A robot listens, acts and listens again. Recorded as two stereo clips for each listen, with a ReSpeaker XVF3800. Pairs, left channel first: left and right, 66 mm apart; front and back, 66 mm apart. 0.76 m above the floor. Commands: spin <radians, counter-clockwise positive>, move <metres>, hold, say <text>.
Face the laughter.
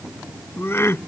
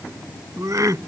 spin 2.53
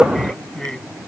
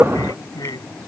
spin 0.17
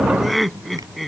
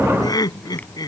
say Found it: laughter, straight ahead.